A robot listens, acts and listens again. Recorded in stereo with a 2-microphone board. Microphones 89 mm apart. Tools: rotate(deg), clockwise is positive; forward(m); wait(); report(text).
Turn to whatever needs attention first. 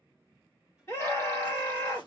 rotate(-30)
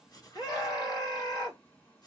rotate(-115)
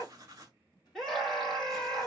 report("Found it: a scream, straight ahead, 1 to 2 m away.")